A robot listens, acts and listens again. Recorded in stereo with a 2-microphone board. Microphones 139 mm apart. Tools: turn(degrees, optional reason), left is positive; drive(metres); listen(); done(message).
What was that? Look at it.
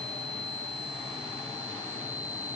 listen()
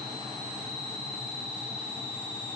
listen()
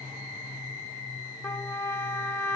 turn(degrees=20, reason="The trumpet: about 20° left or 160° left.")
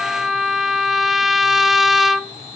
done("Found it: a trumpet, straight ahead.")